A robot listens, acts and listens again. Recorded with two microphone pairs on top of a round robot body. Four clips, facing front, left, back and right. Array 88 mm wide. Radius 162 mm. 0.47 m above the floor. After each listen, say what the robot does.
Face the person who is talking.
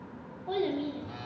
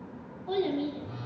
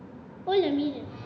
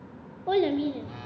Turn 125° right.
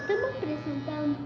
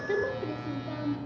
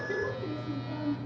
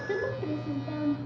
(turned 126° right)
Facing the child speaking.